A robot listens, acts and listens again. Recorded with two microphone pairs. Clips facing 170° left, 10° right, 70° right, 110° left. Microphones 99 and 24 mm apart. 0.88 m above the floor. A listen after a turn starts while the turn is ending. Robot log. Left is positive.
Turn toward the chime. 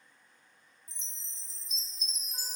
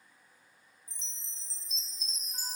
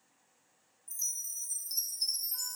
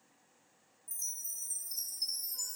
note: The chime: 55° right.
cmd yaw -55
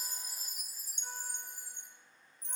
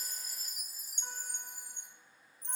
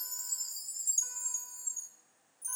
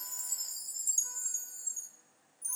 note: The chime is now 10° left.
cmd yaw +10
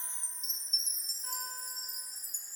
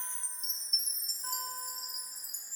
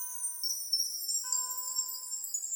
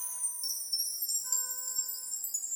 end: Facing the chime.